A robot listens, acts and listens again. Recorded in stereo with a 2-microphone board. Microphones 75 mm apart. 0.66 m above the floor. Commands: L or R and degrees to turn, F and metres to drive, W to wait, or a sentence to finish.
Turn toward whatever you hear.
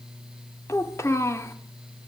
L35
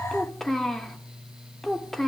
Facing the child speaking.